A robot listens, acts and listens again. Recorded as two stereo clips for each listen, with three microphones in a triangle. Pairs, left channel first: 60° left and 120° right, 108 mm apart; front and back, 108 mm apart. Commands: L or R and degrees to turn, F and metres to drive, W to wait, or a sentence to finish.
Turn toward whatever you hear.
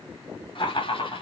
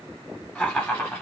L65
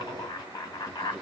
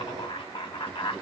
Facing the laughter.